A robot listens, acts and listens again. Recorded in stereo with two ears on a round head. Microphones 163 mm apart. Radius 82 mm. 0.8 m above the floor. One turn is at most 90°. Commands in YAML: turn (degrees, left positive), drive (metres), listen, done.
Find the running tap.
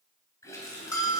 turn: 20
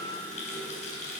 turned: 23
turn: 90
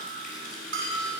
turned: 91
turn: 45
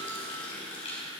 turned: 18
turn: 30
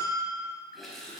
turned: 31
done: "Facing the running tap."